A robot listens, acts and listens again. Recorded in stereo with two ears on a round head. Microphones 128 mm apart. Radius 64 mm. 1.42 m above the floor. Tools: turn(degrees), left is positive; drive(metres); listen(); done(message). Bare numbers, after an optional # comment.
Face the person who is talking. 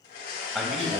turn(-30)
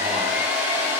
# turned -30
listen()
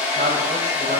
# So it is at 125° right.
turn(-125)
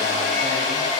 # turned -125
listen()
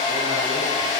listen()
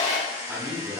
# The man speaking is now 15° right.
turn(-15)
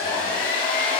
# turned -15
listen()
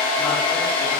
listen()
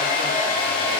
done("I heard a man speaking from this way, but can't make it out now.")